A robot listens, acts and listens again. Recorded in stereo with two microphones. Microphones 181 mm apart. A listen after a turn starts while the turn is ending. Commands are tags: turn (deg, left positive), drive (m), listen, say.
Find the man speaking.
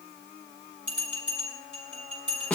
<listen/>
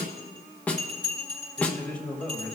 <turn deg="30"/>
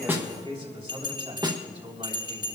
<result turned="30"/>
<turn deg="-35"/>
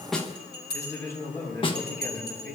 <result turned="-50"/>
<turn deg="15"/>
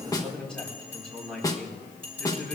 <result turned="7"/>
<say>Facing the man speaking.</say>